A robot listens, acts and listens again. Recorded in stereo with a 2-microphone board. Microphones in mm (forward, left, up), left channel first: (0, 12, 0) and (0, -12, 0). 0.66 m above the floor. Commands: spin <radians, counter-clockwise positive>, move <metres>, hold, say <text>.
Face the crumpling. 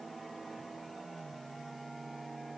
hold
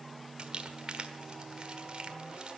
spin -0.79
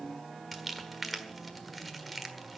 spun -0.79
say Found it: crumpling, straight ahead.